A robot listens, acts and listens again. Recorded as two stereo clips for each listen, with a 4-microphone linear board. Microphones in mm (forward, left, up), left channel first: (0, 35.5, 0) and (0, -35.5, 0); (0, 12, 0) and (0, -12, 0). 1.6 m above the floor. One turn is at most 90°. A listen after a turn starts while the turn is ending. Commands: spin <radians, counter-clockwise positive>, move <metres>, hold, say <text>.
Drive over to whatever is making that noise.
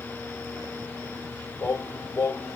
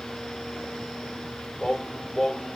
spin 0.79
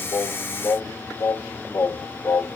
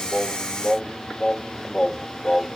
spin 1.48
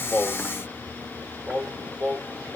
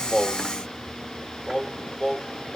spin -0.17
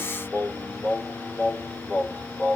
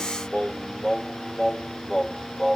move 1.0
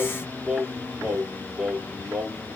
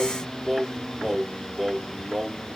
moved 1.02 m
spin -0.26
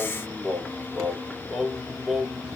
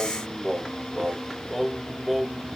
move 1.0
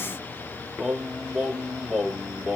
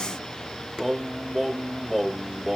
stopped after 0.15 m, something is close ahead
spin -0.17
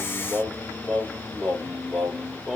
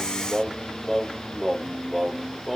say I am next to the singing.